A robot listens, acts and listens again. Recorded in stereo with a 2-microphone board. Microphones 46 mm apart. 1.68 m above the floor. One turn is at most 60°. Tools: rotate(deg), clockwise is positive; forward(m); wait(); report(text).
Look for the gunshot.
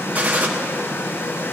rotate(30)
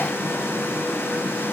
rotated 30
wait()
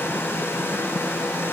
report("I heard a gunshot, but can't make it out now. It was about straight ahead or 120° right.")